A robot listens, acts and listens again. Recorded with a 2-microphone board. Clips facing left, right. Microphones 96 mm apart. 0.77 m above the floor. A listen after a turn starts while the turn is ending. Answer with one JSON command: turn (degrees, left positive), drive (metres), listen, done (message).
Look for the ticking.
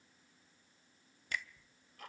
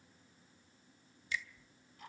{"turn": 70}
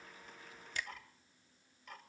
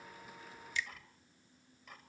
{"done": "Found it: ticking, straight ahead, 2 to 4 m away."}